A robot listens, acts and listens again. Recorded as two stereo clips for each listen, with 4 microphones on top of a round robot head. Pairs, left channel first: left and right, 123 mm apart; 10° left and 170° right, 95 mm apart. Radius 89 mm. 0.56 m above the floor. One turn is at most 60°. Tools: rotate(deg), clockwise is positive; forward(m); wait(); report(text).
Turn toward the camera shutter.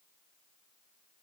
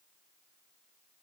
wait()
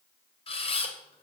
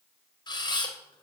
rotate(-50)
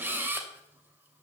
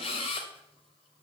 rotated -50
rotate(15)
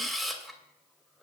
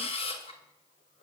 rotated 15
report("Facing the camera shutter.")